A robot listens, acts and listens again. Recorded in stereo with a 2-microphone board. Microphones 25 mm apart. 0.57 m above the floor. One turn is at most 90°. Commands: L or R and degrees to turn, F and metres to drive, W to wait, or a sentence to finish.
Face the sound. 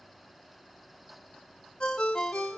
L45
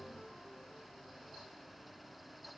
Found it: a ringtone, straight ahead.